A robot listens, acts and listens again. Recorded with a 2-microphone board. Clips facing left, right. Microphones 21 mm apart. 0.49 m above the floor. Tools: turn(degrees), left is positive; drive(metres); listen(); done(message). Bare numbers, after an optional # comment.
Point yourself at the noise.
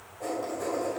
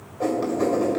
# The writing: about 60° right or 120° right.
turn(-60)
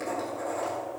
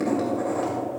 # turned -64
# So it is at 15° right.
turn(-15)
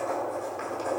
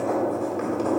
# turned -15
done("Found it: writing, straight ahead.")